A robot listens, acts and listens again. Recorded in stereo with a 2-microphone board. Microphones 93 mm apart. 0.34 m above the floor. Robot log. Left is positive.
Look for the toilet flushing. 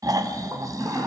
note: The toilet flushing: about 35° right or 145° right.
cmd yaw -35
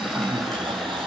end: Facing the toilet flushing, over 4 m away.